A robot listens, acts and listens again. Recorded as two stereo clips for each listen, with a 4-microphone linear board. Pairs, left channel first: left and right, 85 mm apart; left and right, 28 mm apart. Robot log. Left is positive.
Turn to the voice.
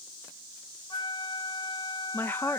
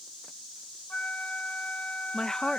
note: The woman speaking: about 25° left or 155° left.
cmd yaw +25
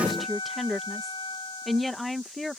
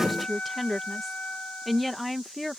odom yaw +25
end: Facing the woman speaking.